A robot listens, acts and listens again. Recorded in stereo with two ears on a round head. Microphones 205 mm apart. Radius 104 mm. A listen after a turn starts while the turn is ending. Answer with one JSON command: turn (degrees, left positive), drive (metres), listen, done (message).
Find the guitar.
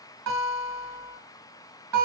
{"turn": -90}
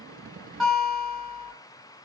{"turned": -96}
{"done": "Facing the guitar."}